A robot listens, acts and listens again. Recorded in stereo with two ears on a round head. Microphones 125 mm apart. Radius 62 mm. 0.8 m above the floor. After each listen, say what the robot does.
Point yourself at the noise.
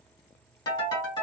Turn 25° left.
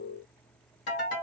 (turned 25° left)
Turn 130° left.
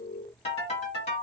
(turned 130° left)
Turn 45° left.
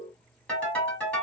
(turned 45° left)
Turn 10° left.
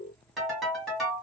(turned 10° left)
Found it: a ringtone, straight ahead.